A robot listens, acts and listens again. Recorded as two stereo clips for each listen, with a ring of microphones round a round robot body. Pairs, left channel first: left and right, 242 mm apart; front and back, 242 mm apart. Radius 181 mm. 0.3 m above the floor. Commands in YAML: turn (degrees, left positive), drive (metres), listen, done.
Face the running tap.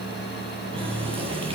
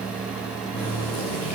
turn: -20
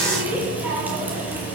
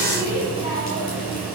done: "Found it: a running tap, straight ahead, over 4 m away."